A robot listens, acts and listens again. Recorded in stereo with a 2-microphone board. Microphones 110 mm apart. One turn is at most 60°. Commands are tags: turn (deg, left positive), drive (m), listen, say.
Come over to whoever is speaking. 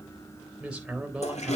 <turn deg="-30"/>
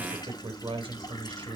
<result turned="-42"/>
<turn deg="-60"/>
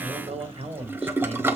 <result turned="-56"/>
<turn deg="-60"/>
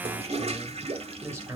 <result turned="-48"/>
<turn deg="-25"/>
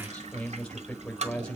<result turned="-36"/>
<turn deg="10"/>
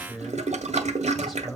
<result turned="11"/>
<drive m="1.0"/>
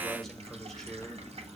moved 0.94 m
<listen/>
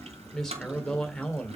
<drive m="1.0"/>
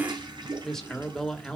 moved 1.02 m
<drive m="1.0"/>
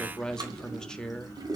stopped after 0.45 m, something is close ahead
<say>Arrived at the man speaking, straight ahead.</say>